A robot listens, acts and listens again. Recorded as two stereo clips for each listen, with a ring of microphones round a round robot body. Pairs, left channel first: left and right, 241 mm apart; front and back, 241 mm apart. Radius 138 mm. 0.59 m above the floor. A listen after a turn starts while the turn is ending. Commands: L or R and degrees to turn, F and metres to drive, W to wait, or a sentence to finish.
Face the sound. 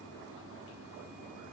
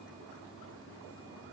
W
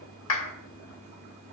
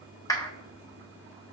L75
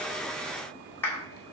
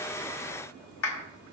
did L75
L10
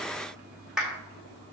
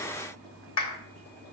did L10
Facing the clap.